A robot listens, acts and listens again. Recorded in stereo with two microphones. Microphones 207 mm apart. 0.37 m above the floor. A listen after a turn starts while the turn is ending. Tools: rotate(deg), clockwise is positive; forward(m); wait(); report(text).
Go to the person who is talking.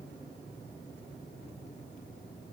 wait()
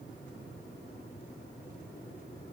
wait()
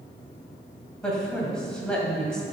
rotate(-30)
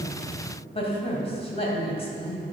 rotate(-145)
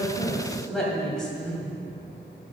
forward(1.0)
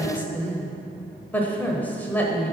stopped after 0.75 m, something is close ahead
rotate(-10)
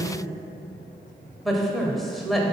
report("Arrived at the woman speaking, straight ahead.")